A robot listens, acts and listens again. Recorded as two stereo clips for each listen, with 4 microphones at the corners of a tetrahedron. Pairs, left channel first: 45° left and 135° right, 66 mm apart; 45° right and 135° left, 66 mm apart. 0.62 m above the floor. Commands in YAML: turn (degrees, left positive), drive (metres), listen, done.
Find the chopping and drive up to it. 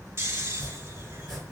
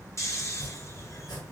turn: -40
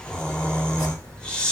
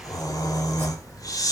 listen: true
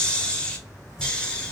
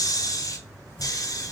listen: true
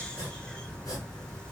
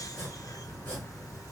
turn: 10
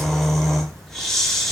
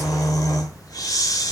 listen: true
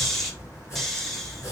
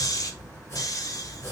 drive: 1.0
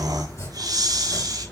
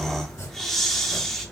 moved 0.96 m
drive: 1.0
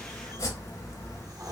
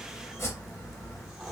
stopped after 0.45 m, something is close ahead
done: "Arrived at the chopping, straight ahead."